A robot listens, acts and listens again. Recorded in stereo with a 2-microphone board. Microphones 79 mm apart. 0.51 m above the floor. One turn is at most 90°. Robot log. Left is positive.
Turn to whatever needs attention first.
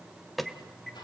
cmd yaw +30
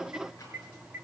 note: So it is at 30° right.
cmd yaw -30
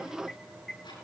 end: Facing the alarm, 1 to 2 m away.